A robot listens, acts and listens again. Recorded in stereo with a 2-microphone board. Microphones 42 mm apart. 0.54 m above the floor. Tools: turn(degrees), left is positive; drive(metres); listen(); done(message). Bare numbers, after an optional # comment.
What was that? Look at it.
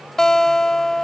turn(30)
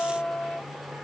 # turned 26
# So it is at 140° left.
turn(140)
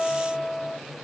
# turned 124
# The guitar is now 20° left.
turn(20)
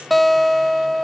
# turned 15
done("Facing the guitar.")